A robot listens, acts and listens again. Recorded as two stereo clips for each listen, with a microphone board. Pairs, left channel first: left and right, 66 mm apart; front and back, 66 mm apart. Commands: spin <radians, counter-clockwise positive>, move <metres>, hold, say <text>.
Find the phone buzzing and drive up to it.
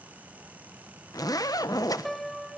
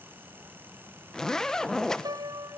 hold
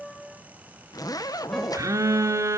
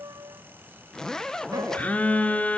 spin -1.22
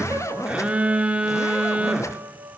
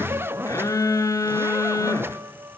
spin -0.35
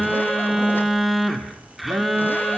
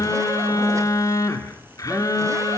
move 1.0
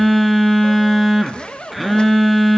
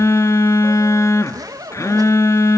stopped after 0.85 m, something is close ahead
say Arrived at the phone buzzing, straight ahead.